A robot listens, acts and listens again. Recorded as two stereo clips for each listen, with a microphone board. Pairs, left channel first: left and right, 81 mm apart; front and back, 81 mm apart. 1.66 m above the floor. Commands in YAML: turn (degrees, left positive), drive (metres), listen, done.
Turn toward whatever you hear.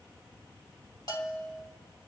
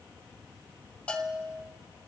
turn: 70
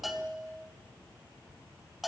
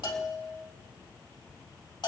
done: "Found it: a bell, straight ahead."